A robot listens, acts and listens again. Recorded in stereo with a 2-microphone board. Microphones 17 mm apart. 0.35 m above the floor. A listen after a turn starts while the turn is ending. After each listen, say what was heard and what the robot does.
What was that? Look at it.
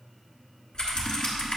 The typing on a keyboard: about 65° left or 115° left. Turn 65° left.
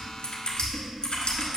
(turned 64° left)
So it is at 50° left. Turn 50° left.
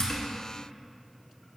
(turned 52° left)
Keep listening.
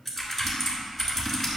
Facing the typing on a keyboard, 1 to 2 m away.